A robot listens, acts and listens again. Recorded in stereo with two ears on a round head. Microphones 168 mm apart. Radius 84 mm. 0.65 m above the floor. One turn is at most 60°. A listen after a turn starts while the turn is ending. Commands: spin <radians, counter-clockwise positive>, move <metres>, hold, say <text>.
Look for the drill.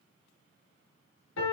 hold
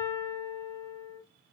hold
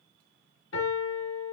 say I can't make out a drill to turn to.